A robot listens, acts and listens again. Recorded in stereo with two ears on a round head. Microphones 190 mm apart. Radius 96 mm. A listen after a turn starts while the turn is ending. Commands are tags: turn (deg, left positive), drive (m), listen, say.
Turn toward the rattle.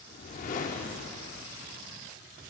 <listen/>
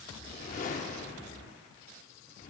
<listen/>
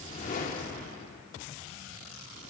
<say>I can't make out a rattle to turn to.</say>